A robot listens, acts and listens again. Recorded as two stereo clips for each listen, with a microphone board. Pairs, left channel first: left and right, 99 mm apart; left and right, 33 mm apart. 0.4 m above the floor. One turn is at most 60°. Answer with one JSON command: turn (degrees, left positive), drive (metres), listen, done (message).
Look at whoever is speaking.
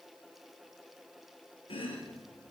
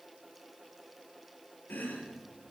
{"listen": true}
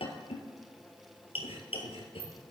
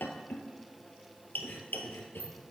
{"listen": true}
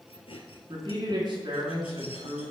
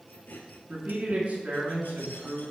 {"turn": -60}
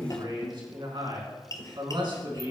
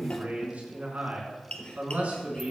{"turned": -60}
{"turn": -60}
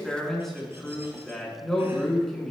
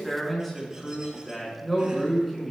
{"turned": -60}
{"done": "Found it: a man speaking, straight ahead, 2 to 4 m away."}